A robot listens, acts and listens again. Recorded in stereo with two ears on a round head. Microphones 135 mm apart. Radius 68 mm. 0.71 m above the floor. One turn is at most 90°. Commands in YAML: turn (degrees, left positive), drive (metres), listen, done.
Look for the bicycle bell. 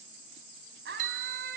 turn: -55
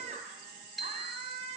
done: "Facing the bicycle bell."